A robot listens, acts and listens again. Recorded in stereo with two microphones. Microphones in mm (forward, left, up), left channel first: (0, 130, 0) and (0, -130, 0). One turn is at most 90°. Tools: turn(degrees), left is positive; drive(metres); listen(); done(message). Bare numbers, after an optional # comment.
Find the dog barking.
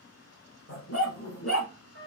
# The dog barking: about 70° left or 110° left.
turn(70)
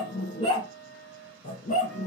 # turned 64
# So it is at 30° left.
turn(30)
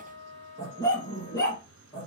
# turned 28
# The dog barking is now 15° left.
turn(15)
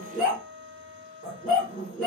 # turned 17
done("Facing the dog barking, 2 to 4 m away.")